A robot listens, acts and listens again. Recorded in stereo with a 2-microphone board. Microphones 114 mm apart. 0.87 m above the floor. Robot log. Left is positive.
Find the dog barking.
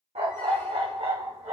cmd yaw -90
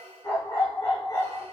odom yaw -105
note: So it is at 35° left.
cmd yaw +35
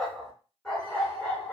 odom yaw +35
end: Found it: a dog barking, straight ahead.